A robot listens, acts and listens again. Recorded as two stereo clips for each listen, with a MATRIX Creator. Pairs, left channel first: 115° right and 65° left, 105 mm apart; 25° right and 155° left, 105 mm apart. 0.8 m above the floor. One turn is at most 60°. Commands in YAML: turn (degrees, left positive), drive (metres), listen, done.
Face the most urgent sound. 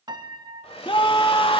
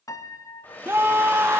turn: -60
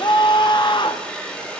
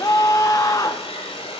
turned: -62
turn: -60
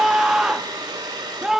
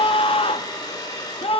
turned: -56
turn: -15
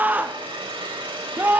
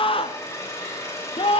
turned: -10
done: "Found it: a scream, straight ahead, under 1 m away."